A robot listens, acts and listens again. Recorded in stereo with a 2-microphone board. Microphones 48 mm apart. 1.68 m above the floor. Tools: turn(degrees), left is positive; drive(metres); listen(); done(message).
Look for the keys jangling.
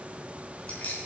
turn(degrees=35)
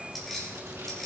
done("Found it: keys jangling, straight ahead, 2 to 4 m away.")